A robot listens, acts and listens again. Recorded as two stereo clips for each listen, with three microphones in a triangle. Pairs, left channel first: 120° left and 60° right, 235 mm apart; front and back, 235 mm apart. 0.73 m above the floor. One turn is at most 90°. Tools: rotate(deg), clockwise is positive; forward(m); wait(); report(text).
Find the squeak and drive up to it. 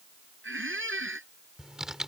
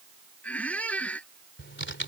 rotate(85)
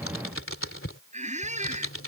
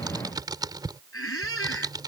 forward(1.0)
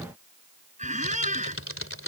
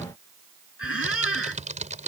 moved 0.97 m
forward(1.0)
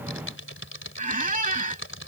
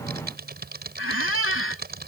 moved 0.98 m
forward(1.0)
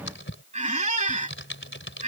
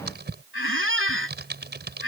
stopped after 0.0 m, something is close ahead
report("Arrived at the squeak, straight ahead.")